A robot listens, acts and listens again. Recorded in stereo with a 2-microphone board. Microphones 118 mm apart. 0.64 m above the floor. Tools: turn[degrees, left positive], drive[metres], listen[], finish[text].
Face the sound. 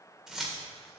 Action: turn[-30]
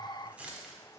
Action: turn[-30]
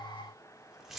Action: turn[30]
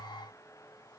Action: listen[]
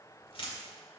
Thought: So it is at 125° left.
Action: turn[125]
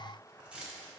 Thought: The keys jangling is now 10° right.
Action: turn[-10]
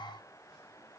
Action: listen[]
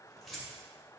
Action: finish[Facing the keys jangling, 2 to 4 m away.]